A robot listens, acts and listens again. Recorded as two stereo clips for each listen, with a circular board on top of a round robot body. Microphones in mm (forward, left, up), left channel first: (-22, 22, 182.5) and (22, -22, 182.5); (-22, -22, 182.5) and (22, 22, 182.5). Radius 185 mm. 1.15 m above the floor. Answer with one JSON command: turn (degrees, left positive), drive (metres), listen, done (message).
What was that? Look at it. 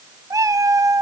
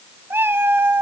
{"turn": -10}
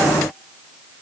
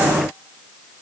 {"listen": true}
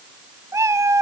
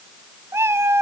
{"done": "Found it: a cat meowing, straight ahead, under 1 m away."}